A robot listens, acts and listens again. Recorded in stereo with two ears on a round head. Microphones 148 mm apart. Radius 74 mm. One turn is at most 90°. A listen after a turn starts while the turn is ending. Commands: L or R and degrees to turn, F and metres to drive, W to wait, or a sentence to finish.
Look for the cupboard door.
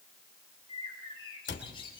L90
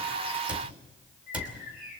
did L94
R10
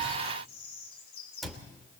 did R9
Found it: a cupboard door, straight ahead.